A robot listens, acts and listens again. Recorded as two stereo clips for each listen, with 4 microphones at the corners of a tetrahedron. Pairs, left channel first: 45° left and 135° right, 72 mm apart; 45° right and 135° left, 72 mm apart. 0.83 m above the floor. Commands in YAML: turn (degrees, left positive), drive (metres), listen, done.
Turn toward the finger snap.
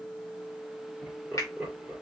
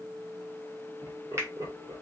turn: 90
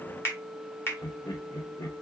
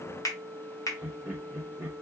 done: "Facing the finger snap, 1 to 2 m away."